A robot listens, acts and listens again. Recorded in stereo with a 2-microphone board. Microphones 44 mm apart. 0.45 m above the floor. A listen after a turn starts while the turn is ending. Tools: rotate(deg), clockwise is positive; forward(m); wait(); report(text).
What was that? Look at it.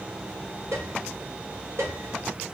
rotate(90)
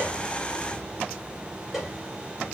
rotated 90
report("Facing the piano, 2 to 4 m away.")